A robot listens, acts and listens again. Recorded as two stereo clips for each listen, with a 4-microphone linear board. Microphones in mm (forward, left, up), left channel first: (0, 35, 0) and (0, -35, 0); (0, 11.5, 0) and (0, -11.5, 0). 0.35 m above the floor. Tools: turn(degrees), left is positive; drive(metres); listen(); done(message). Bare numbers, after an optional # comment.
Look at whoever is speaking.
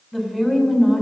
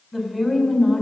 turn(30)
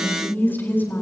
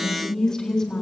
# So it is at 150° left.
turn(150)
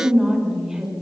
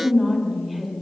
# The woman speaking is now 10° right.
turn(-10)
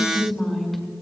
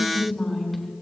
done("Facing the woman speaking, over 4 m away.")